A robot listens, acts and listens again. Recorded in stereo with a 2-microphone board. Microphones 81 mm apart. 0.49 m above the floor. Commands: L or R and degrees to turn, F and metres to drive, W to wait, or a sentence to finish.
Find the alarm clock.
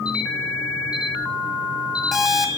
L30
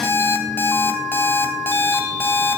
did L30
L150
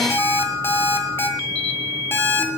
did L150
L30
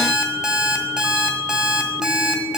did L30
R10
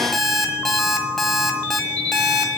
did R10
Found it: an alarm clock, straight ahead, 1 to 2 m away.